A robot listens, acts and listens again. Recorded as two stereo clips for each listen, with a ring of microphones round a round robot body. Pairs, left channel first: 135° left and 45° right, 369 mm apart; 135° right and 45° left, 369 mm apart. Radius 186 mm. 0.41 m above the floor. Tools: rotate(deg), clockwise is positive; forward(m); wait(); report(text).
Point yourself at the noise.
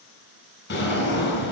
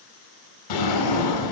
rotate(160)
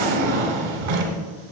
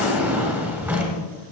rotate(40)
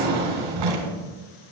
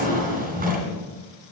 rotate(20)
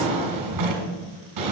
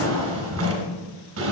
report("Found it: a drawer, straight ahead.")